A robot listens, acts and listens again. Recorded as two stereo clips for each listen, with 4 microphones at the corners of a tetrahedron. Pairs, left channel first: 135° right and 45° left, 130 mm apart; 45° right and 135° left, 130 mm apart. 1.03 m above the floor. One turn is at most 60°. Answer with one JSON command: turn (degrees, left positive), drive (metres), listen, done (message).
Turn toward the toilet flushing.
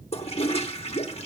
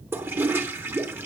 {"turn": -60}
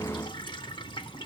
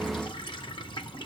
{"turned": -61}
{"turn": -60}
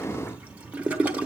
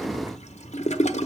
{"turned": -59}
{"turn": -30}
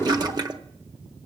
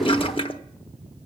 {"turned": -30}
{"done": "Facing the toilet flushing, under 1 m away."}